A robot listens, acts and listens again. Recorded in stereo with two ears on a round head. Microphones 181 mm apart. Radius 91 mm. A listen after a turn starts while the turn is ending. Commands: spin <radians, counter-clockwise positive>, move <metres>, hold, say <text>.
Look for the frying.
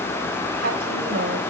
hold
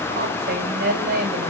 hold
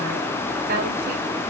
say I can't make out frying to turn to.